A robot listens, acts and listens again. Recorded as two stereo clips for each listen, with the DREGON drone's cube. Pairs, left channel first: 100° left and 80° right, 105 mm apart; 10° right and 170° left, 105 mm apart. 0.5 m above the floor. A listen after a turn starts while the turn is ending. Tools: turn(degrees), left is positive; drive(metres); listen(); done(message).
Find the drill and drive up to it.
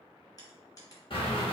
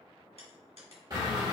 turn(degrees=125)
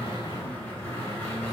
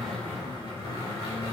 turn(degrees=30)
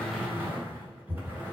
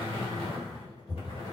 turn(degrees=-10)
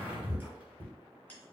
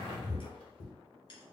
drive(metres=1.0)
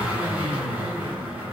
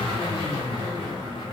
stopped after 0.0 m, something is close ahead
done("Blocked. The drill is further on, straight ahead.")